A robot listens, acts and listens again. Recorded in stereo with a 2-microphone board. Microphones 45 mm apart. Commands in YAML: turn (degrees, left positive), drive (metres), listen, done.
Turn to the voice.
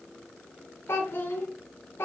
turn: 55
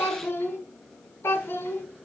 turn: 70
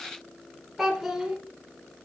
done: "Facing the child speaking."